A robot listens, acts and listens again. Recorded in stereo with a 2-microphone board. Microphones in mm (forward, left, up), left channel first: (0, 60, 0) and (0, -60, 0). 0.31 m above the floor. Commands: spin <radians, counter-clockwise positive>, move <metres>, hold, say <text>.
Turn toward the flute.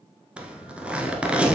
hold
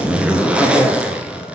hold
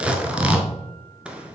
say I can't make out a flute to turn to.